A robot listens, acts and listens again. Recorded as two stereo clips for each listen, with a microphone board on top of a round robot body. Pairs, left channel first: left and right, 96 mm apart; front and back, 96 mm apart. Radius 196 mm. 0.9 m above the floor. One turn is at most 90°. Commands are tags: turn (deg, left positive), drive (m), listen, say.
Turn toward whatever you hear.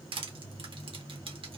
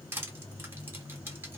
<turn deg="-90"/>
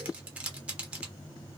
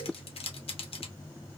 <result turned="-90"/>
<turn deg="-15"/>
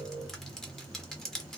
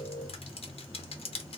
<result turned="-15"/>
<say>Found it: crushing, straight ahead, under 1 m away.</say>